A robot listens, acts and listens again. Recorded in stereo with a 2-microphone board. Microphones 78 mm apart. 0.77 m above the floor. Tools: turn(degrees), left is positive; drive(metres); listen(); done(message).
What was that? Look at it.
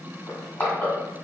turn(degrees=25)
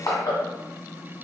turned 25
turn(degrees=125)
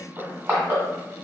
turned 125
turn(degrees=-25)
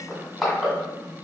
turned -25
done("Found it: crushing, straight ahead.")